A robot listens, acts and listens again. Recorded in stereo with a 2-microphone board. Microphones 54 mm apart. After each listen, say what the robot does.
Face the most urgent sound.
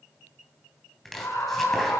Turn 55° left.
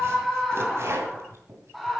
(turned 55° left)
Found it: a scream, straight ahead.